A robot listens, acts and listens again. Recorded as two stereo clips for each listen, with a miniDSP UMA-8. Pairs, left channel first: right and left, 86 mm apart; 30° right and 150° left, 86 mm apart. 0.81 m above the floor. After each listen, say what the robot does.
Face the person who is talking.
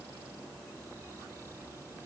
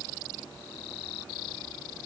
Keep listening.
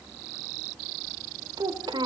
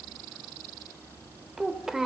Turn 65° left.
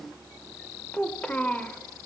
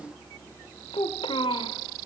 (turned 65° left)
Turn 15° right.
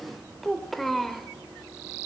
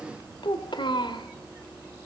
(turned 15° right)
Found it: a child speaking, straight ahead, 1 to 2 m away.